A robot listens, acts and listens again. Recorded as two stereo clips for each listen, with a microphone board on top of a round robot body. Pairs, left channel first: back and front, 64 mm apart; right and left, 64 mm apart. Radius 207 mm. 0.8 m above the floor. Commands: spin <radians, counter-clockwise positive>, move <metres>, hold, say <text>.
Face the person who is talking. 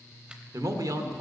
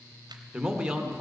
spin 0.17
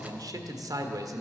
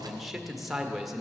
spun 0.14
say Facing the man speaking, 1 to 2 m away.